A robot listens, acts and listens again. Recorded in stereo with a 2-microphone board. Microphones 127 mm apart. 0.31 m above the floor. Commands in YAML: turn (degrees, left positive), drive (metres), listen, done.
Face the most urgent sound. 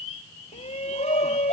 turn: 60
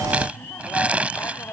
turn: 20
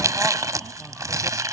listen: true
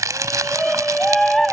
done: "Found it: a shout, straight ahead."